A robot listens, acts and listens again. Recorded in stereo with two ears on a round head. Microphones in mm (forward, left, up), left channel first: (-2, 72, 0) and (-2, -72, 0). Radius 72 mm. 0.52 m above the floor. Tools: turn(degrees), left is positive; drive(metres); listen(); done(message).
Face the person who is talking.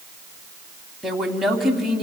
turn(degrees=30)
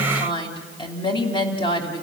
turn(degrees=150)
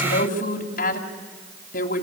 turn(degrees=60)
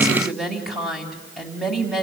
done("Facing the woman speaking, 2 to 4 m away.")